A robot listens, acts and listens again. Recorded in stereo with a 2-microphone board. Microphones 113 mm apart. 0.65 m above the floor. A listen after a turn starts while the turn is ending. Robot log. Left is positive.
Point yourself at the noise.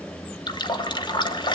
note: The running tap: about 40° left or 140° left.
cmd yaw +40
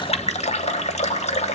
note: So it is at 100° left.
cmd yaw +100
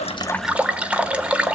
note: The running tap is now 10° right.
cmd yaw -10
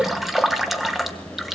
end: Facing the running tap, 1 to 2 m away.